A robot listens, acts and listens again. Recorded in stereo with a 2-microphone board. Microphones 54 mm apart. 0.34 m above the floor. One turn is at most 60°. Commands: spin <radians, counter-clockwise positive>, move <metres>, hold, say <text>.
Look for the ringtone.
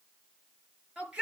hold
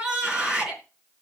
hold
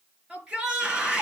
say I can't make out a ringtone, only a shout.